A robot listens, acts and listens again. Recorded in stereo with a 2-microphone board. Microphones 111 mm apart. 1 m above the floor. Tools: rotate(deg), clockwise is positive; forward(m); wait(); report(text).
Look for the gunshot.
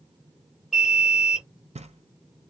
wait()
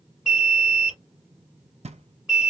wait()
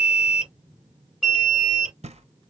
report("I can't make out a gunshot to turn to.")